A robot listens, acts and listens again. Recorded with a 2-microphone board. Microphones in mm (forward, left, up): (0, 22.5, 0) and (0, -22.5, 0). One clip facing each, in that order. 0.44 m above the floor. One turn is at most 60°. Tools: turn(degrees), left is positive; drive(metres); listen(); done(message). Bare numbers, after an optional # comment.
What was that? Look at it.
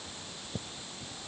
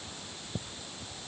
listen()
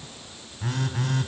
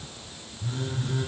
turn(60)
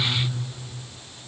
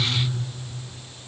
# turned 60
# So it is at 25° left.
turn(25)
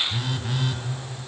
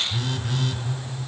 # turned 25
done("Found it: a phone buzzing, straight ahead.")